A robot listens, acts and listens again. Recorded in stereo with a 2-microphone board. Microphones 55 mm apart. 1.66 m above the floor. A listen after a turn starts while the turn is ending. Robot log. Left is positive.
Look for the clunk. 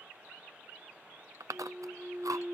note: The clunk: about 55° right or 125° right.
cmd yaw -55
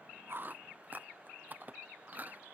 cmd idle
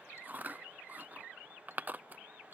end: I heard a clunk, but can't make it out now. It was about straight ahead or 70° right.